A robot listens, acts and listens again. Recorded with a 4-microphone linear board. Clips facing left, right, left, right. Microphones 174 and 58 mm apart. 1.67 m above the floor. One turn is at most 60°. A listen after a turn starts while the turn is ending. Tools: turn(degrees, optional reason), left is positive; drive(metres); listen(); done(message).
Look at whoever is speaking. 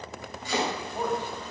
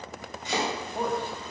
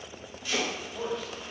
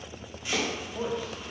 turn(degrees=-25, reason="The man speaking: about 25° right or 155° right.")
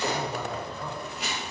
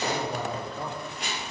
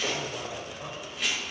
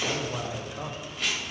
turn(degrees=-60, reason="So it is at 105° right.")
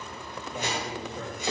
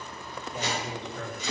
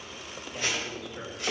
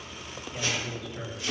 turn(degrees=10, reason="The man speaking is now 10° left.")
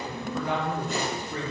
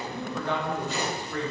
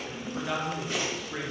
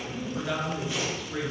turn(degrees=20, reason="The man speaking is now 20° left.")
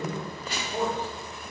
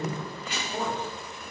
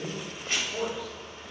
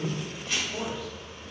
turn(degrees=15, reason="The man speaking is now 15° left.")
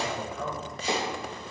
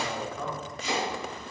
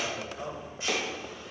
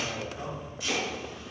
done("Facing the man speaking.")